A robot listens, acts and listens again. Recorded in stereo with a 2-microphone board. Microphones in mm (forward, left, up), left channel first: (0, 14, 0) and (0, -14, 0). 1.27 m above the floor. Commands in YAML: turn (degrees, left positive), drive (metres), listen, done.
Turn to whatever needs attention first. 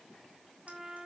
listen: true
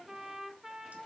listen: true
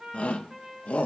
turn: 50
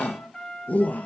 turn: 80
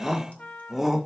turn: -10
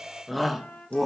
done: "Found it: a shout, straight ahead."